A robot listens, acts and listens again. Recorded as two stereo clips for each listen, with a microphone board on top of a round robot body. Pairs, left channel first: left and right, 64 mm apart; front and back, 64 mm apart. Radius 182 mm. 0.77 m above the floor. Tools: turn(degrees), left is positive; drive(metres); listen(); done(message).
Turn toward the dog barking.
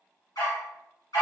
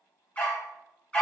turn(degrees=70)
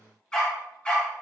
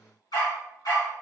turn(degrees=20)
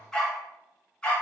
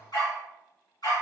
turn(degrees=15)
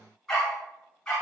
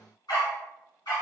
turn(degrees=10)
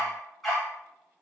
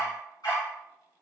done("Found it: a dog barking, straight ahead.")